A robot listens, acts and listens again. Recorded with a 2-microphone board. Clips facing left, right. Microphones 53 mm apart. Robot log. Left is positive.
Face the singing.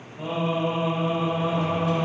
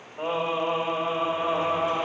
note: The singing: about 55° right or 125° right.
cmd yaw -55
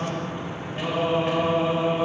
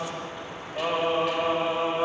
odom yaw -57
note: So it is at 50° right.
cmd yaw -50
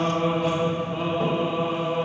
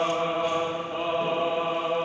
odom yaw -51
note: The singing is now 30° right.
cmd yaw -30
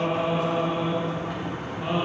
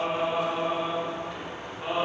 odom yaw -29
note: The singing is now 10° right.
cmd yaw -10
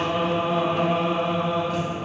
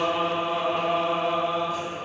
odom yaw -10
end: Found it: singing, straight ahead.